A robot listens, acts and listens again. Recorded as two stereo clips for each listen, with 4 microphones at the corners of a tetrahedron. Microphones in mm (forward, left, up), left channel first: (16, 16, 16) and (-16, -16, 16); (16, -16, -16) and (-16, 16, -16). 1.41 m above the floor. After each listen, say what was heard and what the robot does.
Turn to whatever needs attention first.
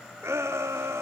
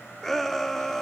The shout: 130° right. Turn 130° right.
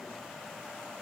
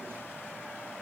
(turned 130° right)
Keep listening.
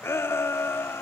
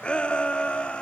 The shout is now 20° left. Turn 20° left.
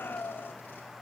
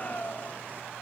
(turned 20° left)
Found it: a shout, straight ahead.